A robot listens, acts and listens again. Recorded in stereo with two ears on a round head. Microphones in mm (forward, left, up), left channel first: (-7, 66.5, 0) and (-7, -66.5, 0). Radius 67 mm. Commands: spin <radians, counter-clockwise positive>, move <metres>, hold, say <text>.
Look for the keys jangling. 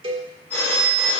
hold
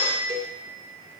hold
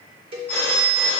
say I can't make out keys jangling, only a cowbell and a phone ringing.